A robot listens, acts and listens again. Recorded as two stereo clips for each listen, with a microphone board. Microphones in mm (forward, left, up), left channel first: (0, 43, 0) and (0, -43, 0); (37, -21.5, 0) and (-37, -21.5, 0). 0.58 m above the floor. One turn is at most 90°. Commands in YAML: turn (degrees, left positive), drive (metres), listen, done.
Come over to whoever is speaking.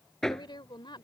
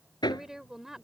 turn: 90
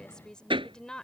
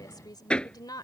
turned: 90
turn: 10
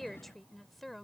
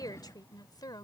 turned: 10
drive: 1.0
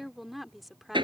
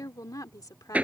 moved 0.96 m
drive: 1.0
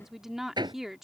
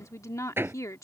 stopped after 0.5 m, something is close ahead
done: "Arrived at the woman speaking, straight ahead."